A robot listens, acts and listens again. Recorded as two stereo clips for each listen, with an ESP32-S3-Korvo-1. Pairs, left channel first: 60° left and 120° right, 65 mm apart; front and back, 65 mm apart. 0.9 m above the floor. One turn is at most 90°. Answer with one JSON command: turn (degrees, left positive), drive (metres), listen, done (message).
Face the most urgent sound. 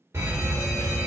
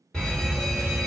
{"turn": -75}
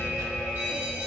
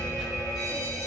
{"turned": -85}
{"turn": 10}
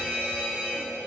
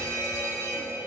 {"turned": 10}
{"done": "Found it: a fire alarm, straight ahead, 2 to 4 m away."}